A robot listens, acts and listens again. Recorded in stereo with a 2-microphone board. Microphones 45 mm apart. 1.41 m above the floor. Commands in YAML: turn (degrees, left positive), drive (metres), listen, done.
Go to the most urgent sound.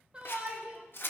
turn: -25
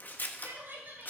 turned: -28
turn: -125
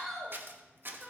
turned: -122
drive: 1.0
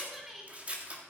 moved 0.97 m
drive: 1.0
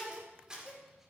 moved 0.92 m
turn: -10
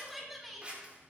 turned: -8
drive: 1.0
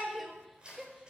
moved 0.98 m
drive: 1.0
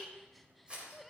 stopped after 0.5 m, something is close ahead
done: "Arrived at the shout, straight ahead."